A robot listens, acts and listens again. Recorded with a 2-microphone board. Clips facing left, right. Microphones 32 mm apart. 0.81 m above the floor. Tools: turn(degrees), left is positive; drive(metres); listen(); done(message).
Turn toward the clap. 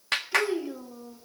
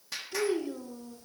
turn(degrees=65)
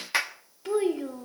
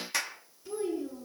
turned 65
turn(degrees=30)
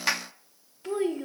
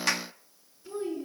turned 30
turn(degrees=10)
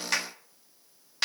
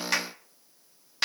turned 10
done("Facing the clap, 1 to 2 m away.")